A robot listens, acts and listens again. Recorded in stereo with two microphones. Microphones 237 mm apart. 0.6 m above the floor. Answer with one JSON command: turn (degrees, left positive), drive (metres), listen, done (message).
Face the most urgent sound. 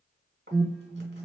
{"turn": -15}
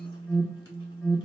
{"done": "Found it: an alarm, straight ahead."}